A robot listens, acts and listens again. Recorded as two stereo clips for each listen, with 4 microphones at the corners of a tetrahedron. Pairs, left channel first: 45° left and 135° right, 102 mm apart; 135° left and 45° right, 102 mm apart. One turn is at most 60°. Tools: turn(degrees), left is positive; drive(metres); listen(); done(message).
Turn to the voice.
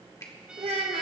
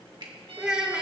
turn(degrees=-60)
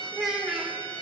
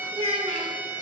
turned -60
turn(degrees=-50)
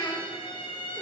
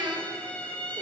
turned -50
turn(degrees=-10)
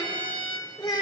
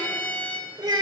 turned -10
done("Facing the child speaking.")